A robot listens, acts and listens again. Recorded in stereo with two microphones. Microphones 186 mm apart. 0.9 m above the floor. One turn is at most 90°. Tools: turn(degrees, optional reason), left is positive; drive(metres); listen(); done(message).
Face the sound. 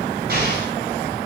turn(degrees=-60, reason="The explosion: about 60° right or 120° right.")
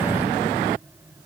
listen()
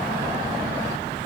done("I heard an explosion, but can't make it out now. It was about straight ahead or 60° right.")